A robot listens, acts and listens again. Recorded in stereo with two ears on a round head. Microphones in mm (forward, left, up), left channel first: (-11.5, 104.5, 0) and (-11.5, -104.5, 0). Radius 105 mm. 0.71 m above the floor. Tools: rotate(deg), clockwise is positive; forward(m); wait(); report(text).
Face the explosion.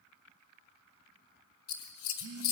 wait()
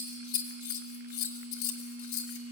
wait()
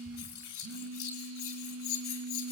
report("I can't make out an explosion, only a phone buzzing and scissors.")